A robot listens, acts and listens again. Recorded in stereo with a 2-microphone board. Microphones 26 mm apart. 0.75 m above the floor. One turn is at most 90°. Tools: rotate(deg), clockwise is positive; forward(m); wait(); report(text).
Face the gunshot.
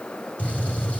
rotate(-90)
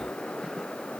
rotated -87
report("Facing where the gunshot came from. I can't hear it now.")